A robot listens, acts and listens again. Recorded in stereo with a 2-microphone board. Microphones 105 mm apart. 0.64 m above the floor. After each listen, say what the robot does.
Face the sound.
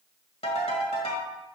Turn 90° left.
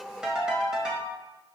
Turn 10° right.
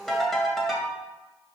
Facing the ringtone.